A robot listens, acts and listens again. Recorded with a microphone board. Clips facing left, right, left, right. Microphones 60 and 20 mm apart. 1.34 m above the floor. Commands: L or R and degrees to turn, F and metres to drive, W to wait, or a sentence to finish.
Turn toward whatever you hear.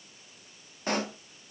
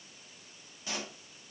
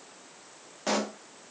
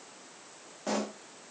L55
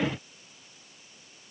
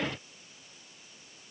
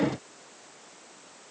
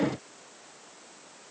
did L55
W
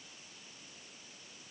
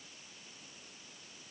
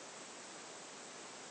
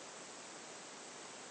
I heard a pop, but can't make it out now. It was about straight ahead or 70° left.